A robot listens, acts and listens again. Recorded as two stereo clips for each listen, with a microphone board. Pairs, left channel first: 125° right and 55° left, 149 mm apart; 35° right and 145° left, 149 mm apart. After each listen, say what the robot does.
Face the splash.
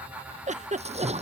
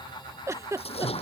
Turn 15° left.
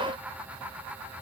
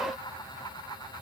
I heard a splash from this way, but can't make it out now.